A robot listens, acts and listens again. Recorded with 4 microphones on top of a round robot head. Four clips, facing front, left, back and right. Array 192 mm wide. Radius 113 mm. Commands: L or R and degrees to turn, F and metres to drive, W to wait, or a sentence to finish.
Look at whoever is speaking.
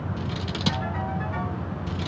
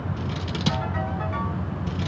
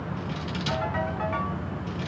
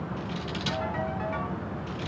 W
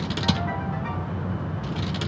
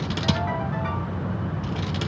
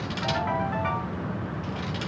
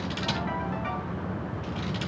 W
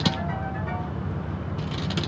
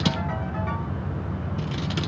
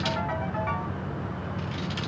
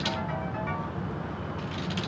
I can't make out anyone speaking, only scissors.